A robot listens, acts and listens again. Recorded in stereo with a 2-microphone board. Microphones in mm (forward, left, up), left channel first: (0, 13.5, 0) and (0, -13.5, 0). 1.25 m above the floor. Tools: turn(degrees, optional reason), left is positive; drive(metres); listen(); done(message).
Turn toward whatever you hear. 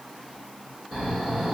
turn(degrees=-20, reason="The snoring: about 20° right or 160° right.")
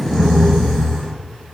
done("Found it: snoring, straight ahead, 1 to 2 m away.")